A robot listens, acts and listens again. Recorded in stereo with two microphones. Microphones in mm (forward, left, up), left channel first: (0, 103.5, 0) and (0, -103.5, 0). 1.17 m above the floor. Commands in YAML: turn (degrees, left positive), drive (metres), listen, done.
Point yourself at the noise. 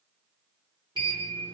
turn: -20
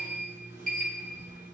turn: -135
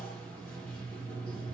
done: "Facing the sliding door, 1 to 2 m away."